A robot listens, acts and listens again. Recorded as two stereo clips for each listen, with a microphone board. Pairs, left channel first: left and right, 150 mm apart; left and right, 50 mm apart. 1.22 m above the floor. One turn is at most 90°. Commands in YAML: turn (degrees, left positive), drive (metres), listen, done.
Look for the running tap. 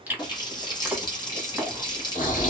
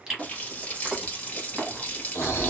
turn: 30
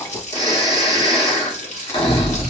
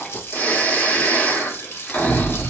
turn: 90
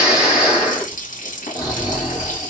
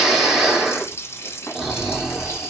turn: 70
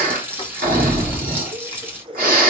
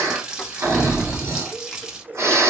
turn: -15
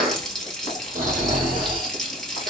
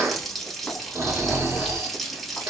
done: "Found it: a running tap, straight ahead, under 1 m away."